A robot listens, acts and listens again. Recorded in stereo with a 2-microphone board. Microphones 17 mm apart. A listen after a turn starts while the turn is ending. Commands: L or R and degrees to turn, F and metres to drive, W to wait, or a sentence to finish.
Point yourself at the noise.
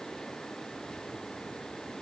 W
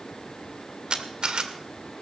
R60
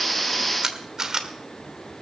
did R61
R45
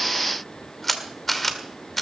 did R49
Facing the camera shutter.